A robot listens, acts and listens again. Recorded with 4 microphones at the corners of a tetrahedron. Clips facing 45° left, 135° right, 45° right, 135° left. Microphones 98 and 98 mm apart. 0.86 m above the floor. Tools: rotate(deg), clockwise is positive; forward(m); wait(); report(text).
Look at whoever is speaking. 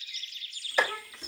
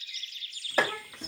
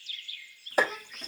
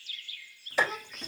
rotate(165)
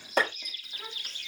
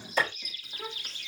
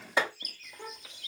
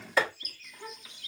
rotate(55)
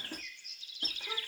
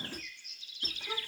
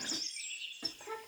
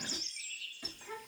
rotate(15)
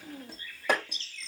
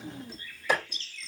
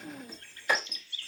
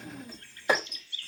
report("Found it: a child speaking, straight ahead, 2 to 4 m away.")